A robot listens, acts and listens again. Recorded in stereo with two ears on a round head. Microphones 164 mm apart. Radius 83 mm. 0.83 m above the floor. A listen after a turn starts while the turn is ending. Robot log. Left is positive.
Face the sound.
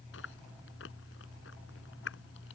cmd yaw +90
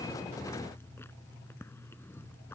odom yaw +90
note: So it is at 15° left.
cmd yaw +15
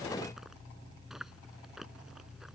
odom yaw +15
end: Facing the chewing.